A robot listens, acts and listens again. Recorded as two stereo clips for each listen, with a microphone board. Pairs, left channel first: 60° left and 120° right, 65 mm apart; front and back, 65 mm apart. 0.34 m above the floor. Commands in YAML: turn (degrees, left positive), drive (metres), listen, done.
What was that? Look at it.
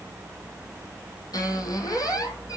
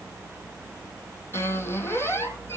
turn: 50
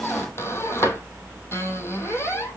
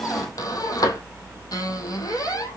turn: 15
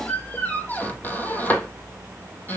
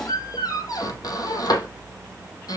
done: "Found it: a squeak, straight ahead."